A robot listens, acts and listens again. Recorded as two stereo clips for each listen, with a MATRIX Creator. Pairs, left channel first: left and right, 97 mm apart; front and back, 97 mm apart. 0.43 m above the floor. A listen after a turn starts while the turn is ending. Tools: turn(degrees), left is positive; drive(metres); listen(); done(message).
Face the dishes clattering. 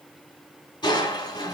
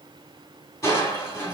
listen()
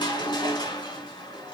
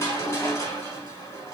listen()
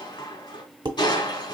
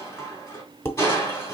turn(degrees=-60)
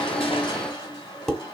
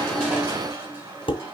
done("Found it: dishes clattering, straight ahead, under 1 m away.")